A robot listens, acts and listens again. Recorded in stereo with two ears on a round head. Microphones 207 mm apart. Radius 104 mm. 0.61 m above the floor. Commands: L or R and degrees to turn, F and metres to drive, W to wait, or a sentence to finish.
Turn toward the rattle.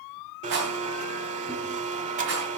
R55
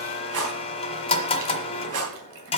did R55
R65
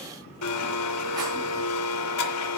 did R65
W
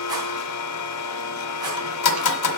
W
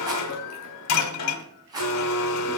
R15
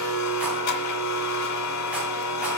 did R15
W
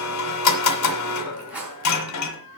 Found it: a rattle, straight ahead, 2 to 4 m away.